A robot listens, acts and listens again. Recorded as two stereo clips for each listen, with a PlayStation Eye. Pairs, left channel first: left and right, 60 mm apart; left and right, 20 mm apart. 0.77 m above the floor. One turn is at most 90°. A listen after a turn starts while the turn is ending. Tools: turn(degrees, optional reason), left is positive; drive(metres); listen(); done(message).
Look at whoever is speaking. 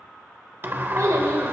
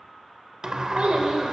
turn(degrees=-90)
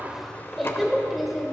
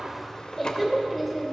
done("Found it: a child speaking, straight ahead, 2 to 4 m away.")